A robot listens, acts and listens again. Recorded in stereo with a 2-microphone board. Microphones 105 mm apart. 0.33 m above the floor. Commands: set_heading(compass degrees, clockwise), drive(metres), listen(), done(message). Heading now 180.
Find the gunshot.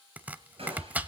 set_heading(245)
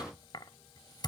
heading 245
listen()
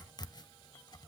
done("I heard a gunshot, but can't make it out now. It was about straight ahead or 50° right.")